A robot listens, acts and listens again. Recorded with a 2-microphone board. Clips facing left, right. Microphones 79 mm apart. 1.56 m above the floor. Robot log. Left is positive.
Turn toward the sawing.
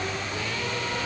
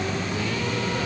cmd idle
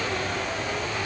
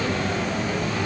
cmd idle
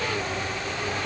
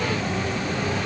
end: I can't make out sawing.